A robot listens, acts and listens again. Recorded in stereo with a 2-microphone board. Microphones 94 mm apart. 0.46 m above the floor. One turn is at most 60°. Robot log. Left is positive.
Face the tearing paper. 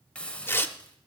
note: The tearing paper: about 25° left or 155° left.
cmd yaw +25
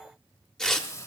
end: Facing the tearing paper, under 1 m away.